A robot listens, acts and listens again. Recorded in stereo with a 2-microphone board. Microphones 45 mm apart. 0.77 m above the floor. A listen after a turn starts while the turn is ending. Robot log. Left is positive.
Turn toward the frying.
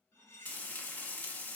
note: The frying: about 40° left or 140° left.
cmd yaw +40
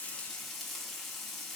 end: Facing the frying, under 1 m away.